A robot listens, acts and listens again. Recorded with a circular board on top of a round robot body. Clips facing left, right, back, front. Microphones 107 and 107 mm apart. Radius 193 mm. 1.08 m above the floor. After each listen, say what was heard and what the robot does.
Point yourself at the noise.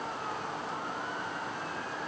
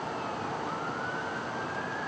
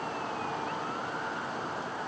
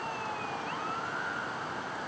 Keep listening.
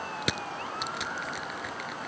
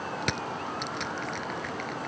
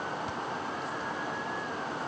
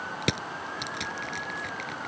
Facing the crushing.